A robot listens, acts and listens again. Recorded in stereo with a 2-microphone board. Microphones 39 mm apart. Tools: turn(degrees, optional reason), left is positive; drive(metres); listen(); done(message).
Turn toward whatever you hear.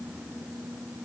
listen()
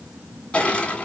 turn(degrees=30, reason="The crushing: about 30° left or 150° left.")
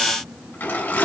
turn(degrees=115, reason="So it is at 115° left.")
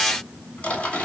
turn(degrees=35, reason="The crushing is now 35° left.")
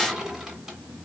turn(degrees=-10, reason="The crushing is now 10° right.")
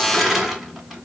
done("Found it: crushing, straight ahead, 1 to 2 m away.")